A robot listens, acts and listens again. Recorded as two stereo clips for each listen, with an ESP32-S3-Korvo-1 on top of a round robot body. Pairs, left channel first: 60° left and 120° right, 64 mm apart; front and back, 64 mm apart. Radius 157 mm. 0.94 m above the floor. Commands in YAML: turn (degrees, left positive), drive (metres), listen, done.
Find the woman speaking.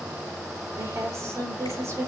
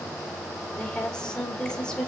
turn: -75
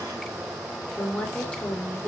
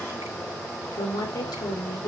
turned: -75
turn: -15
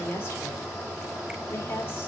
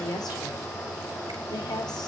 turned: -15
done: "Found it: a woman speaking, straight ahead."